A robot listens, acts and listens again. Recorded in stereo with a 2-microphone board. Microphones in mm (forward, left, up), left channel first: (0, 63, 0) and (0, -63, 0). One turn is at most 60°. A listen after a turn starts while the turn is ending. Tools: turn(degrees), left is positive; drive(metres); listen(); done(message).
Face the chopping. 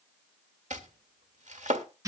turn(degrees=-60)
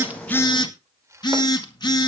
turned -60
listen()
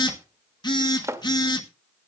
turn(degrees=-25)
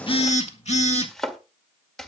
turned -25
done("Found it: chopping, straight ahead.")